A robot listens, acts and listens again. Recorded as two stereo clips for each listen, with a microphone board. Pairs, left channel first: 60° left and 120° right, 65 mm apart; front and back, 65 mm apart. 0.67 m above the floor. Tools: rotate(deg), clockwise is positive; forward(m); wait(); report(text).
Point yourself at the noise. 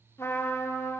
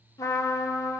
rotate(-20)
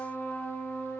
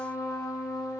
report("Found it: a trumpet, straight ahead, 1 to 2 m away.")